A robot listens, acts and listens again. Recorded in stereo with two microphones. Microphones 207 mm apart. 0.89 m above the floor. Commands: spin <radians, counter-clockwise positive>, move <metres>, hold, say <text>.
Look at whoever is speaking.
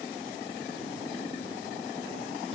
hold
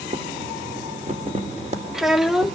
spin 0.52
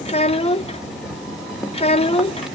spin 2.62
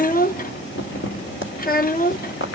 spin 0.79
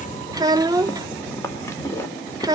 spin -0.35
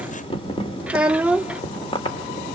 say Found it: a child speaking, straight ahead.